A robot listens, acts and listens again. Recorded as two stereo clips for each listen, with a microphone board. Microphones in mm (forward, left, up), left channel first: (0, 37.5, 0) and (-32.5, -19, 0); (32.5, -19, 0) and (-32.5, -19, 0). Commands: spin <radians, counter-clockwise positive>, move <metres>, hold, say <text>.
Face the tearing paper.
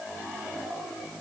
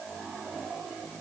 hold
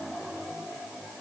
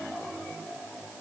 hold
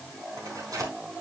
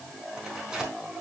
spin -1.75
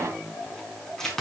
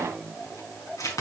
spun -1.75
spin -0.35
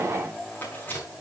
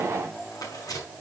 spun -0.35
say Found it: tearing paper, straight ahead, over 4 m away.